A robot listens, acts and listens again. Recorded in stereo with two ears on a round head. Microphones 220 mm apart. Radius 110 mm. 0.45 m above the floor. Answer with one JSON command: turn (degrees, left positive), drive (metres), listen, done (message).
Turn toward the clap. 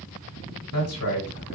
{"listen": true}
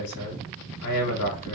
{"listen": true}
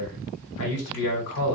{"done": "I can't make out a clap to turn to."}